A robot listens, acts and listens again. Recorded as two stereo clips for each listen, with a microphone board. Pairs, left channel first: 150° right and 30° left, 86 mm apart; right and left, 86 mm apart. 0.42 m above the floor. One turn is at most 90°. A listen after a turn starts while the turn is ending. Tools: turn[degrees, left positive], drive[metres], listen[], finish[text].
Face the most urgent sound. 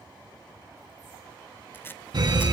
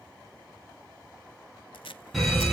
Action: finish[Found it: a fire alarm, straight ahead.]